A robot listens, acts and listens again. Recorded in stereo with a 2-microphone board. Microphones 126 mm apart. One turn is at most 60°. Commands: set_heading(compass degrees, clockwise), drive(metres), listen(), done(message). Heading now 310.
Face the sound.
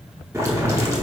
set_heading(335)
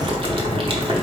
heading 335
set_heading(35)
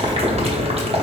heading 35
set_heading(95)
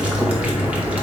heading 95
set_heading(105)
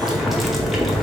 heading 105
done("Found it: boiling, straight ahead.")